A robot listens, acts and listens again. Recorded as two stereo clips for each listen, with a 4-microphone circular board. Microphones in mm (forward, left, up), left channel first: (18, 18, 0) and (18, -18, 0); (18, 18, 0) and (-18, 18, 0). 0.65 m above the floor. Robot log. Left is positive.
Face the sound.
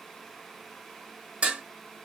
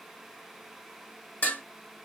note: The dishes clattering: 35° right.
cmd yaw -35
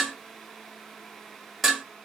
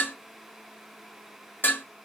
end: Facing the dishes clattering.